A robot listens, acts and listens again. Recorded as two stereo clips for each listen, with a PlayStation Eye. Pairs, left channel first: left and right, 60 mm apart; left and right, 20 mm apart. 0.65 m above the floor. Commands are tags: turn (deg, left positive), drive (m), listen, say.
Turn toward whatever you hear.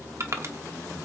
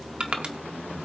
<turn deg="-55"/>
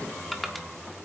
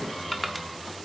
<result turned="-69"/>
<say>Facing the crushing, 1 to 2 m away.</say>